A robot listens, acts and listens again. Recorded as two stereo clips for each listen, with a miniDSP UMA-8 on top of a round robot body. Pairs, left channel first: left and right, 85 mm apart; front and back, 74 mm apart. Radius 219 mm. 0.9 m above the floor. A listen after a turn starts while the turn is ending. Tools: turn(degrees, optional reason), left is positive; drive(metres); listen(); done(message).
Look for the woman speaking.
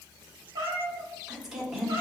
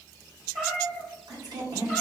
turn(degrees=180, reason="The woman speaking: straight behind.")
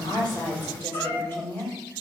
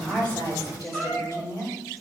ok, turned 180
turn(degrees=25, reason="The woman speaking is now 25° left.")
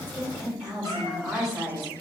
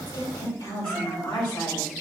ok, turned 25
done("Found it: a woman speaking, straight ahead.")